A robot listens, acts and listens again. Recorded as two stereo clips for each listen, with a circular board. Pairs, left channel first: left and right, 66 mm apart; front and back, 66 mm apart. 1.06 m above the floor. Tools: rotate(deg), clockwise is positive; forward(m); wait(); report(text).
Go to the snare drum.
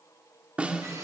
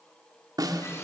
rotate(160)
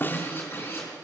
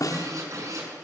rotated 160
rotate(-30)
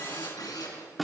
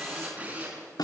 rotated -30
forward(1.0)
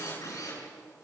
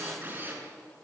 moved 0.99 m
wait()
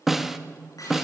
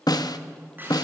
forward(1.0)
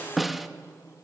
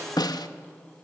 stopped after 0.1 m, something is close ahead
report("Arrived at the snare drum, straight ahead.")